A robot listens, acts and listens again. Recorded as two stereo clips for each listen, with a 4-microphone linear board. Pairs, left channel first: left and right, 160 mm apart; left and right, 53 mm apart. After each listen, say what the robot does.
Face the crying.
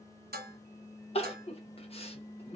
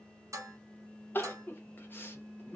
Turn 40° left.
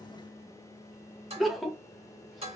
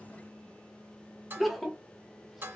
Found it: crying, straight ahead.